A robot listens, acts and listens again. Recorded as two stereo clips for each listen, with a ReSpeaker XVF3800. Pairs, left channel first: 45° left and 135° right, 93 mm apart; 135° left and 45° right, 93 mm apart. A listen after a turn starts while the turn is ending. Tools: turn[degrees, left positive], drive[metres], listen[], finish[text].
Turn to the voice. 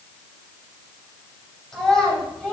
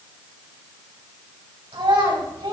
Thought: The child speaking: 35° right.
Action: turn[-35]
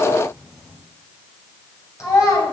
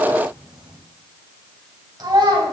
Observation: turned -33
Action: finish[Found it: a child speaking, straight ahead, 2 to 4 m away.]